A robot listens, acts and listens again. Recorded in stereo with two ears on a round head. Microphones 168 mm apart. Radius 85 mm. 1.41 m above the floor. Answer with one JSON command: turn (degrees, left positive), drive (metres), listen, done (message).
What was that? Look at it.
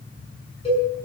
{"turn": 30}
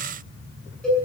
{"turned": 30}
{"done": "Found it: a cowbell, straight ahead."}